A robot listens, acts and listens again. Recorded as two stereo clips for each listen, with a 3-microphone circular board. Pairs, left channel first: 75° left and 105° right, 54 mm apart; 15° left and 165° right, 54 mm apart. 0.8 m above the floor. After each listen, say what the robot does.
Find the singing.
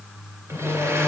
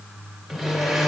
Turn 30° left.
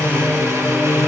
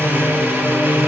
Turn 30° right.
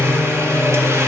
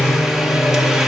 Turn 15° right.
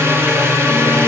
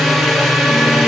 Turn 15° right.
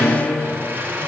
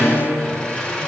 Found it: singing, straight ahead, 2 to 4 m away.